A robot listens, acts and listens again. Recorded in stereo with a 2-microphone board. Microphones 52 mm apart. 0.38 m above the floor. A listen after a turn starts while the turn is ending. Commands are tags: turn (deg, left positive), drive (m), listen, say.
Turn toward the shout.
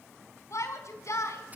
<turn deg="65"/>
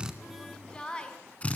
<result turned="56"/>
<turn deg="20"/>
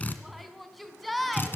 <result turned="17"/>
<say>Facing the shout.</say>